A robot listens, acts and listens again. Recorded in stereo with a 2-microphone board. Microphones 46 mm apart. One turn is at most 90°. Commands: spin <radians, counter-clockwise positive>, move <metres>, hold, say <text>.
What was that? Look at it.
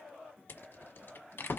spin 0.87
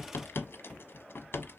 spin 1.13
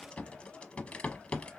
spin 0.52
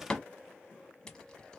spin 0.35
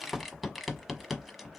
say Found it: a rattle, straight ahead.